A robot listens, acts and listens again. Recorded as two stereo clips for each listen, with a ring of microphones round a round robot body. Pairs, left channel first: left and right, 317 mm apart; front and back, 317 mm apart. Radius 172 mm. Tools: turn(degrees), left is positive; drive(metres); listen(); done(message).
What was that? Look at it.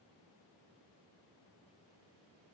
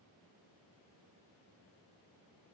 listen()
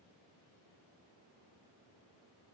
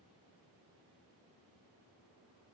listen()
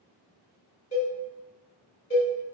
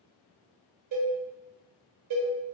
turn(degrees=160)
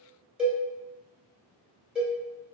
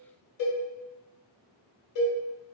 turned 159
done("Facing the cowbell, 1 to 2 m away.")